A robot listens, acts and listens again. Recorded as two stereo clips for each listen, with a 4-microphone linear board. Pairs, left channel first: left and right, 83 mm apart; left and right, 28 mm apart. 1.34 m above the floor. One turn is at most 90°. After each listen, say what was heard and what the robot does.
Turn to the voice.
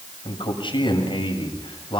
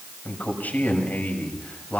Turn 90° left.
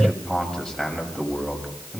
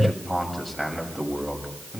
Facing the man speaking.